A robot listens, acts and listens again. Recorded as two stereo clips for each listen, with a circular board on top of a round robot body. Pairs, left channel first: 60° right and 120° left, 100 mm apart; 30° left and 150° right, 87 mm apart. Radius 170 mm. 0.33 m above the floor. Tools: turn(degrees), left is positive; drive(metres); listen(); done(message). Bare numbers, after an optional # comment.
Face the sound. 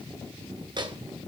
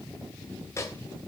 # The microwave: 85° left.
turn(85)
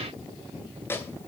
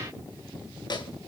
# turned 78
done("Facing the microwave.")